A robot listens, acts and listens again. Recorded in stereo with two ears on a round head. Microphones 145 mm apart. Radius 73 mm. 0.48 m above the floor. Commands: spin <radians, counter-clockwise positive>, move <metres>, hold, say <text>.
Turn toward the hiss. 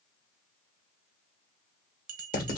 hold
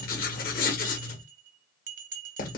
hold
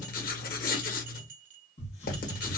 spin 0.70
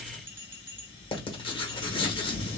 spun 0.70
spin 1.66
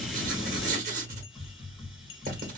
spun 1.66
say Facing the hiss, 2 to 4 m away.